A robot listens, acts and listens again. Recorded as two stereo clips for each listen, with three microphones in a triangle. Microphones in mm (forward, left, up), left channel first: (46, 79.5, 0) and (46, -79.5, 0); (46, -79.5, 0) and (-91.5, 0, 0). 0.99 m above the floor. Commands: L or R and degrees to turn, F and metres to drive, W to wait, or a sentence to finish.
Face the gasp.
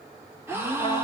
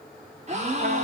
R165
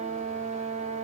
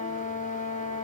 Facing where the gasp came from. I can't hear it now.